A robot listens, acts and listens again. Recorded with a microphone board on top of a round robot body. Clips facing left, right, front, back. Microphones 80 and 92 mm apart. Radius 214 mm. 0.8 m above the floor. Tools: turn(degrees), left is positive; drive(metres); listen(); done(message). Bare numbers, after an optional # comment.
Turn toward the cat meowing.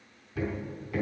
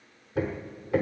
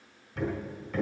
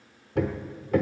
listen()
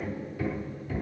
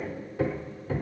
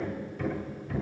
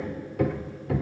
listen()
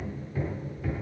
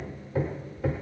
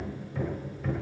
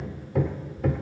done("I can't make out a cat meowing to turn to.")